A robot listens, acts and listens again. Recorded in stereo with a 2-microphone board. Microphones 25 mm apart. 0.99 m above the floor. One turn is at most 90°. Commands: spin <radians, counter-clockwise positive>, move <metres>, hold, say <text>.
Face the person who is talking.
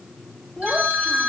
spin 0.52
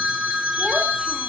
hold
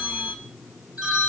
hold
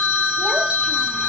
say I heard a child speaking, but can't make it out now. It was about 15° right or 135° left.